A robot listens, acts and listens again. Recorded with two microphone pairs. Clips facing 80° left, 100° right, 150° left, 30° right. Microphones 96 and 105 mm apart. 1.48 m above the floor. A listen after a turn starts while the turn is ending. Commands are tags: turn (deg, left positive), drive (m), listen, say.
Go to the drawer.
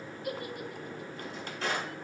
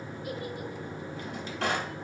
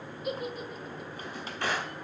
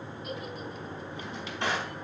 <turn deg="-100"/>
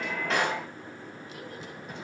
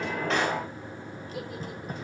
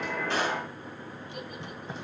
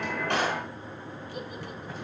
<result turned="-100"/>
<listen/>
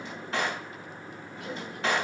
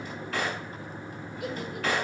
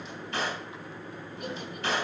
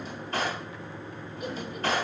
<turn deg="10"/>
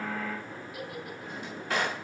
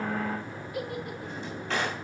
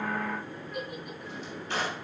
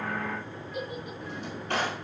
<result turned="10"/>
<drive m="1.0"/>
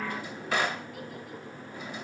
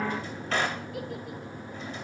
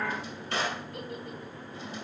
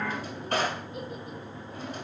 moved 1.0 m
<drive m="1.0"/>
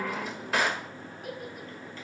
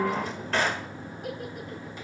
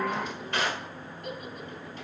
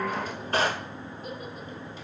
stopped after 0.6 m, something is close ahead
<say>Arrived at the drawer, straight ahead.</say>